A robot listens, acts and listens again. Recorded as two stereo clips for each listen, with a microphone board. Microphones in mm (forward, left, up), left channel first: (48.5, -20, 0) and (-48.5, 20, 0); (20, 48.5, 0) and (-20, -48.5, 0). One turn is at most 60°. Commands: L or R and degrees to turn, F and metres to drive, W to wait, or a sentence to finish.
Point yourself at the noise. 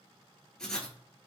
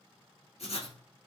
L60
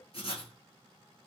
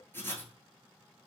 Found it: writing, straight ahead.